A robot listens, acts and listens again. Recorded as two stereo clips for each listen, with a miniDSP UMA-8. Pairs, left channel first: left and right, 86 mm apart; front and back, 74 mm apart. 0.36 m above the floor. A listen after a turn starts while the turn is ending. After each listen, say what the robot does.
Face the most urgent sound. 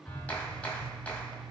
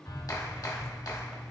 Keep listening.
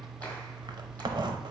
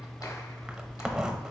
Keep listening.
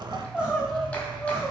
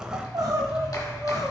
Turn 170° right.
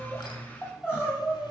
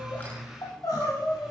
Turn 25° left.
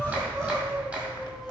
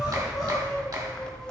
Keep listening.
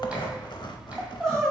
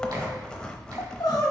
Found it: crying, straight ahead, 1 to 2 m away.